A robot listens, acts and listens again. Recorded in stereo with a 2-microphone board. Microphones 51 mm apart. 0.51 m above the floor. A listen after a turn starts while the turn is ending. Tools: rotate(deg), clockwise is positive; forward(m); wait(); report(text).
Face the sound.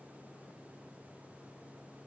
wait()
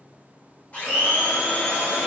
rotate(-30)
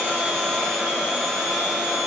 report("Facing the blender, 1 to 2 m away.")